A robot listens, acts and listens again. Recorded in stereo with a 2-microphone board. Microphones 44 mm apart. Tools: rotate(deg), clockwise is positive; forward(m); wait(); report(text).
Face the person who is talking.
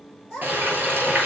rotate(30)
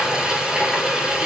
wait()
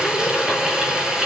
wait()
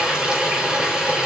report("I heard a child speaking, but can't make it out now. It was about 15° left or 135° right.")